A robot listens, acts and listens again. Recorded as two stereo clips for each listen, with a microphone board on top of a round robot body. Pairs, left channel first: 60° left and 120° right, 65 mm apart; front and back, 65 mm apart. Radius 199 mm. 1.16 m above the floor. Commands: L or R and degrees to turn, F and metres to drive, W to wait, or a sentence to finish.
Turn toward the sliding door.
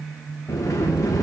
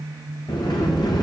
L15
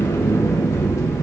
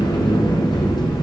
L10
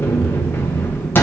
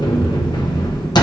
Facing the sliding door, under 1 m away.